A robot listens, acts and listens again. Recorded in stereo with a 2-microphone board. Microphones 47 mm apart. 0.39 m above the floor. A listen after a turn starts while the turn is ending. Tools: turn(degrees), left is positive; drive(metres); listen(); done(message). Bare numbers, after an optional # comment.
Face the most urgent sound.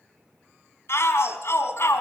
# The shout: about 65° left or 115° left.
turn(65)
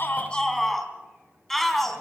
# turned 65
done("Facing the shout, 2 to 4 m away.")